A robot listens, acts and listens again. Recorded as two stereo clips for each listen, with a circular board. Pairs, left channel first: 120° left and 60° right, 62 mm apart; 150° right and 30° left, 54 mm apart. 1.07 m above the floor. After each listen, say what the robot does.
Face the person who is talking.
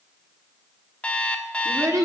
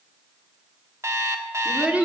Turn 30° right.
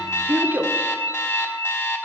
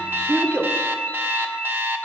Found it: a child speaking, straight ahead.